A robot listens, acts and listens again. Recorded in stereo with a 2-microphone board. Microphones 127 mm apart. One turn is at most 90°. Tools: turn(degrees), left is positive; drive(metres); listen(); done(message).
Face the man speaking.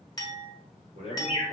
turn(degrees=-90)
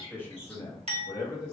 turn(degrees=35)
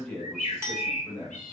turn(degrees=25)
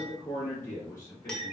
turn(degrees=20)
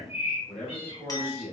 done("Facing the man speaking, 2 to 4 m away.")